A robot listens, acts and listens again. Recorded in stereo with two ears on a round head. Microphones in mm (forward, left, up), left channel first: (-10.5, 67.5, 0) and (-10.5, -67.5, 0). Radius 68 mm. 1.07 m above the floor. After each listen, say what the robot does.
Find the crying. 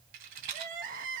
Turn 60° right.
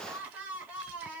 Turn 10° right.
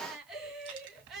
Found it: crying, straight ahead.